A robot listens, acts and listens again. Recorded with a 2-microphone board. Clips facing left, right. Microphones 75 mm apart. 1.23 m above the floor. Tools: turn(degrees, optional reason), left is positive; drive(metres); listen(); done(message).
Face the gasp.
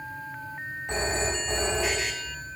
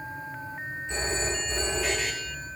listen()
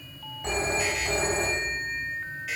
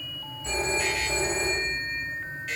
listen()
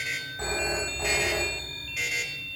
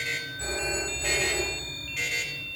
done("I can't make out a gasp, only a phone ringing.")